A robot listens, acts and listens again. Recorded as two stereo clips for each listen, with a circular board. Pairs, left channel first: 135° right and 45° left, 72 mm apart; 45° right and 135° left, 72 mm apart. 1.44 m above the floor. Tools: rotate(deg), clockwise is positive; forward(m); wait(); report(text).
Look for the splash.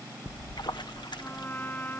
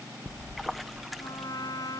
rotate(135)
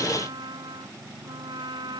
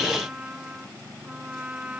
report("Facing where the splash came from. I can't hear it now.")